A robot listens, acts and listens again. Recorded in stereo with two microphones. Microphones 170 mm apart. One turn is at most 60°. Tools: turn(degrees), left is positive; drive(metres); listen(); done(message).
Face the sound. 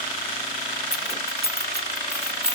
turn(degrees=-60)
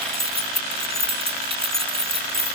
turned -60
turn(degrees=-35)
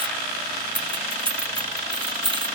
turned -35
turn(degrees=-30)
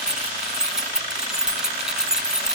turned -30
done("Facing the keys jangling.")